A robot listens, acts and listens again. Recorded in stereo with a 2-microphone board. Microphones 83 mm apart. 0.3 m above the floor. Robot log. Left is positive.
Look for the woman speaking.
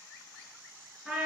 cmd idle
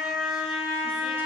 cmd idle
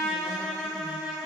end: I can't make out a woman speaking, only a trumpet.